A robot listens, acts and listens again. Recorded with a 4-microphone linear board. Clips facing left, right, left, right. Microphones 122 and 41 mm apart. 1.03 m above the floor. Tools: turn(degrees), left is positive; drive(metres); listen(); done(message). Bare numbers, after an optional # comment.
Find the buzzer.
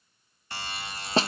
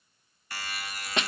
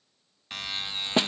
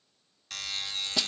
# The buzzer: about 25° left or 155° left.
turn(25)
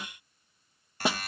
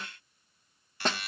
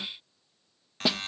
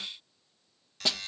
# So it is at 125° left.
turn(125)
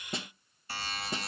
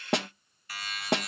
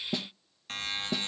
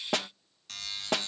# The buzzer is now 35° left.
turn(35)
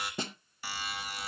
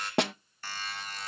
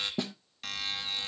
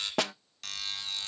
# The buzzer is now 15° left.
turn(15)
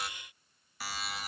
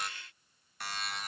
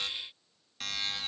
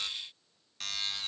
done("Facing the buzzer.")